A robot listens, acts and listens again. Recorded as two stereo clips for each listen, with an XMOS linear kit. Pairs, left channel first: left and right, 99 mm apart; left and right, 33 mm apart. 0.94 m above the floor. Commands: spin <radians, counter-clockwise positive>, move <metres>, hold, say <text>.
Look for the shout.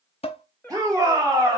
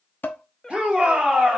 spin -0.61
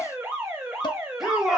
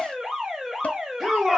say Found it: a shout, straight ahead.